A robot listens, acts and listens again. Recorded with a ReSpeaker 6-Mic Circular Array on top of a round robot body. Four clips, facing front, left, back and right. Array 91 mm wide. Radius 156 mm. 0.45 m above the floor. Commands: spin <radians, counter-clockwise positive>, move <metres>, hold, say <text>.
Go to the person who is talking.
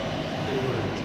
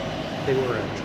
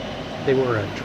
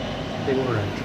spin 2.97
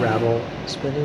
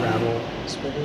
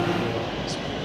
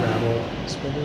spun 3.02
move 1.0
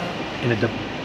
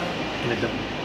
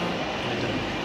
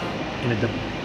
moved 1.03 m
spin -0.17
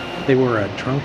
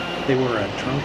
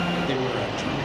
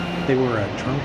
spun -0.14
move 1.0
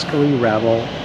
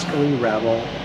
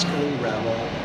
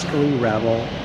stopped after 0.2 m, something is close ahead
say I am next to the man speaking.